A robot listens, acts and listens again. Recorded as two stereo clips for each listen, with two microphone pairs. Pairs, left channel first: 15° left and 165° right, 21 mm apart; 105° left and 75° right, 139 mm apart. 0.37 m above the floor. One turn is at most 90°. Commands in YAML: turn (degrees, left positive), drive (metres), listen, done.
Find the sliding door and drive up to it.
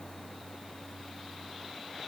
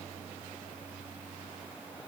listen: true
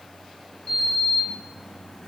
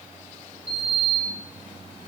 turn: -30
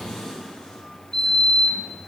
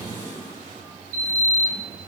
turn: -10
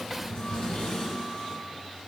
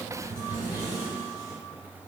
drive: 1.0
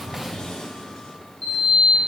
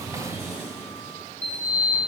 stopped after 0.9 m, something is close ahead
turn: -10
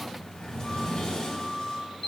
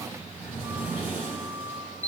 done: "Arrived at the sliding door, straight ahead."